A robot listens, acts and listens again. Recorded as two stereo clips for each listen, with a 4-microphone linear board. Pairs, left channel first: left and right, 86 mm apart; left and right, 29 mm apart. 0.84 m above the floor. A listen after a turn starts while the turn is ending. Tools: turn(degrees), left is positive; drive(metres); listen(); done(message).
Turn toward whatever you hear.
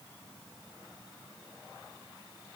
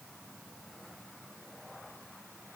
listen()
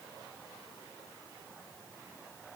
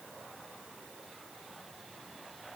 listen()
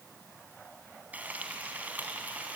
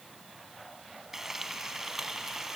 turn(degrees=-20)
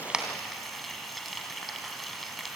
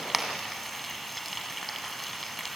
done("Found it: frying, straight ahead, 2 to 4 m away.")